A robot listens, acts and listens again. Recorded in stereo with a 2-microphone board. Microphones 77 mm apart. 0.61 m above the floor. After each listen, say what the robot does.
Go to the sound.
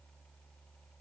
Keep listening.
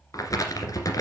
Turn 50° left.
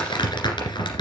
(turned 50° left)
Turn 80° left.
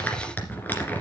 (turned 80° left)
Turn 25° left.
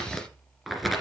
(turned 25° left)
Drive 1.0 m forward.
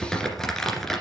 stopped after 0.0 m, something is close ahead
Something is in my way. I am facing the crumpling but have not reached it.